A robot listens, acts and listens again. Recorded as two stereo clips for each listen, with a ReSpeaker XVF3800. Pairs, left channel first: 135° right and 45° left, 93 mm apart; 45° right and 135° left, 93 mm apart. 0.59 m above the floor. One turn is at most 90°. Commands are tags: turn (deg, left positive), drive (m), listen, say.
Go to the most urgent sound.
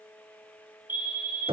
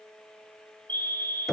<turn deg="-90"/>
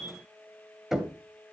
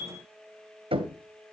<turn deg="-25"/>
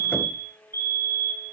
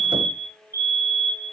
<drive m="1.0"/>
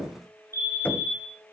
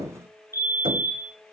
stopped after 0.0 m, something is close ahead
<say>Something is in my way. I am facing the fire alarm but have not reached it.</say>